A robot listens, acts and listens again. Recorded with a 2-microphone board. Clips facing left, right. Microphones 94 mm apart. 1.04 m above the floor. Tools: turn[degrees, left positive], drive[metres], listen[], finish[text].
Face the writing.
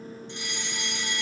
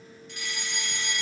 Action: listen[]
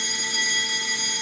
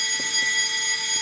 Action: listen[]
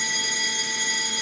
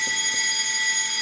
Action: finish[I can't make out writing, only a fire alarm.]